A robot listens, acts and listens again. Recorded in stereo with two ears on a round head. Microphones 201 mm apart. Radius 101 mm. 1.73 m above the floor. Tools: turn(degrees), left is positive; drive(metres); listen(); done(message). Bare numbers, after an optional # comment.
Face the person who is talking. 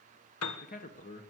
# The man speaking: about 40° left or 140° left.
turn(40)
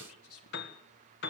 # So it is at 100° left.
turn(100)
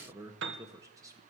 # The man speaking is now 15° right.
turn(-15)
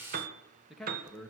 done("Facing the man speaking, 1 to 2 m away.")